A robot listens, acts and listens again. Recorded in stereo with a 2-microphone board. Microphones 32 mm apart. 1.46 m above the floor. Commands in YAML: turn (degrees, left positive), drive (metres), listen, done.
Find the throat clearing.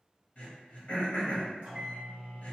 turn: 45
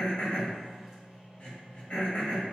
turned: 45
turn: 85
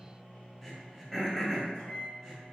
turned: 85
turn: 10
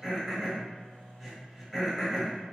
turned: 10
done: "Facing the throat clearing."